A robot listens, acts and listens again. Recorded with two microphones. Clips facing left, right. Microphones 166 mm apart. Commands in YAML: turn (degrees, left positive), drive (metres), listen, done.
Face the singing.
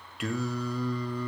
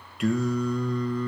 turn: 30
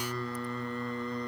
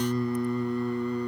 turn: -10
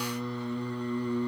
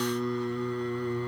turn: 10
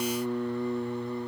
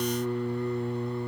done: "Facing the singing, 2 to 4 m away."